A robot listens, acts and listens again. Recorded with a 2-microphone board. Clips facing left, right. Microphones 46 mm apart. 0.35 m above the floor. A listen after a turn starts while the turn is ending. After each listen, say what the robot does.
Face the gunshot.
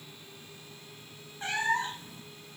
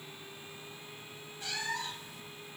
Keep listening.
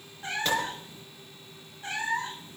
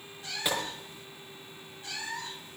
Turn 30° right.
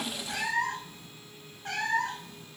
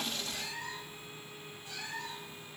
Keep listening.
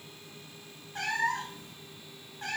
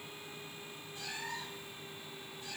I heard a gunshot, but can't make it out now. It was about 20° left or 140° right.